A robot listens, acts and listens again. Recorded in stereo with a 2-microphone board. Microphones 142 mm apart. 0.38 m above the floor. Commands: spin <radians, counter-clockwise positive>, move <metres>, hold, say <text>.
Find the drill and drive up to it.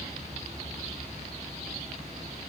hold
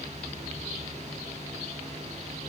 hold
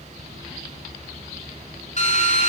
spin 0.96
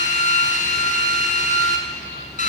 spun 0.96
spin 1.05
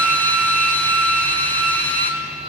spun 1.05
spin 0.17
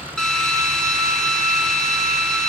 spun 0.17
move 1.0
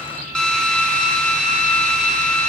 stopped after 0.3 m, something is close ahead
say Something is in my way. I am facing the drill but have not reached it.